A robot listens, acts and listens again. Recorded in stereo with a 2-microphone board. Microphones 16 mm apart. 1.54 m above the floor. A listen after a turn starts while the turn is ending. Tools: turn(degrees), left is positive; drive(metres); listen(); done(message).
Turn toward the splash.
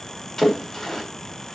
turn(degrees=25)
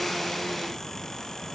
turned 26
listen()
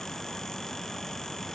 done("I heard a splash, but can't make it out now. It was about 5° right or 130° left.")